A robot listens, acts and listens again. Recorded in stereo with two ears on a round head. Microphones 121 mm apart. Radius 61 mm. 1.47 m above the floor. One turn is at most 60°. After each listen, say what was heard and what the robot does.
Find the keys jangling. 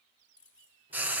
Turn 30° left.
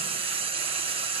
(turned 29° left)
Keep listening.
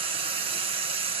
Keep listening.
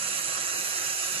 I heard keys jangling, but can't make it out now. It was about 20° right or 145° left.